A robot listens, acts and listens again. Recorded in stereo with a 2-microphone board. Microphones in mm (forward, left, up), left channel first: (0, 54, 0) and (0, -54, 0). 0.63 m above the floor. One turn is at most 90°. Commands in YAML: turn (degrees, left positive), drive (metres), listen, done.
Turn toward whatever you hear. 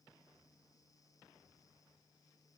listen: true
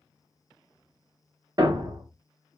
turn: -45
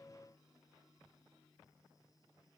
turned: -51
listen: true
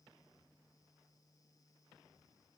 done: "I heard a thud, but can't make it out now. It was about 10° left or 85° right."